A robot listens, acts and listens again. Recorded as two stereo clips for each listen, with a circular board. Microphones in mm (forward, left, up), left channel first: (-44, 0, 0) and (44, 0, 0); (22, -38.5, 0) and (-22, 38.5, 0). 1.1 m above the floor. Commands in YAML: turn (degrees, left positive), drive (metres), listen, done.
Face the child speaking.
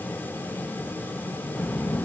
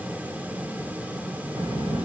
turn: 110
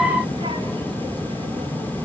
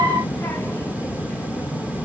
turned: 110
turn: 10
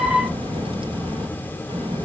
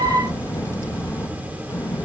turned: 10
done: "Facing the child speaking."